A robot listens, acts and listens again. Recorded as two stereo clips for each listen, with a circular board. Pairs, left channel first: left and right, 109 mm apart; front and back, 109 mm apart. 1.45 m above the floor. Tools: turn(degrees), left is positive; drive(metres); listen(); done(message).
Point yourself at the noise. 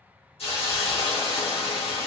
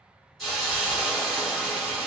turn(degrees=85)
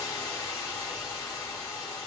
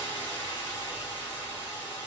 turn(degrees=35)
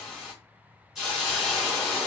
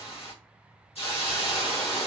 done("Facing the hiss.")